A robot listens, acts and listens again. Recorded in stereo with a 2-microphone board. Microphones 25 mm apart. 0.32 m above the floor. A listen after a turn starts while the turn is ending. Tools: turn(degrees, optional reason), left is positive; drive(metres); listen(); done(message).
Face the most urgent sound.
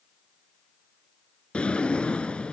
listen()
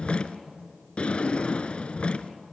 listen()
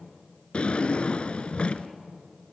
done("I can't make out anything urgent to turn to.")